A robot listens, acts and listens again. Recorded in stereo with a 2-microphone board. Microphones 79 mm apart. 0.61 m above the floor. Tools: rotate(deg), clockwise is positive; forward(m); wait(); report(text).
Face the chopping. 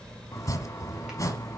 rotate(-45)
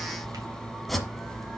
report("Found it: chopping, straight ahead, 1 to 2 m away.")